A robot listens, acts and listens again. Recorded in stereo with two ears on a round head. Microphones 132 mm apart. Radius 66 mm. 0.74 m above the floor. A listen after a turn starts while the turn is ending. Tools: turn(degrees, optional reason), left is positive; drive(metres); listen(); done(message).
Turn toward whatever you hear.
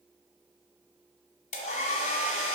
turn(degrees=50, reason="The hair dryer: about 50° left or 130° left.")
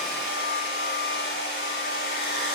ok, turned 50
turn(degrees=80, reason="So it is at 80° left.")
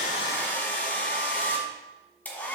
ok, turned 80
turn(degrees=10, reason="The hair dryer is now 10° left.")
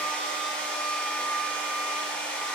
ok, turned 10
turn(degrees=10, reason="The hair dryer is now 10° left.")
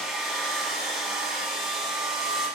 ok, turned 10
done("Found it: a hair dryer, straight ahead.")